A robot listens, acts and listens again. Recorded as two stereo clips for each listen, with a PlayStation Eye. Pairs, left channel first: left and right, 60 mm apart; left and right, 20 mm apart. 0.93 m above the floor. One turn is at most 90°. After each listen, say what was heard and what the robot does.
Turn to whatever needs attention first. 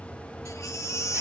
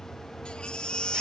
The baby crying: about 60° left or 120° left. Turn 60° left.
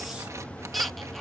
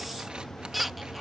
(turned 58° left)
Found it: a baby crying, straight ahead.